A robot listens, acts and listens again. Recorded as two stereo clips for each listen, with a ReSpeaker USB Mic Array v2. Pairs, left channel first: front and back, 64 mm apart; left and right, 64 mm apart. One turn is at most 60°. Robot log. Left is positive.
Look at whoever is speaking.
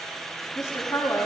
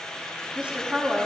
note: The woman speaking: 15° right.
cmd yaw -15
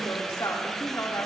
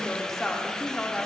note: The woman speaking is now 20° left.
cmd yaw +20
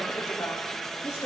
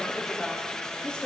note: The woman speaking is now 20° left.
cmd yaw +20
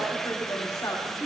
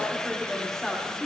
note: The woman speaking is now 15° left.
cmd yaw +15
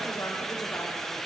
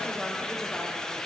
cmd idle
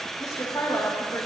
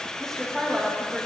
note: The woman speaking is now 10° left.
cmd yaw +10
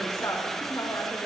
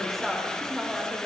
end: Facing the woman speaking.